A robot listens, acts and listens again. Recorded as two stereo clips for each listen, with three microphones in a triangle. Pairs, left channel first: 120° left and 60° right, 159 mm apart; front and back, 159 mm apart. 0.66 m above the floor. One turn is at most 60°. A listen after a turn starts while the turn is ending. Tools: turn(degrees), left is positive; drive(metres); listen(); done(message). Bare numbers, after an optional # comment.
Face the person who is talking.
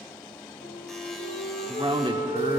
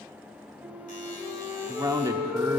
# The man speaking: 115° right.
turn(-60)
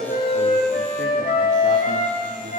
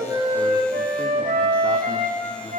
# Nothing new. It was at 55° right.
turn(-55)
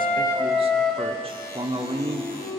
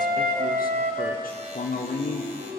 # The man speaking is now 10° right.
turn(-10)
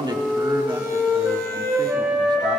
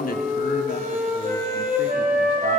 listen()
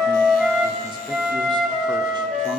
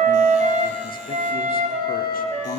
listen()
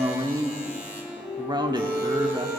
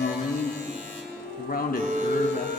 done("Facing the man speaking.")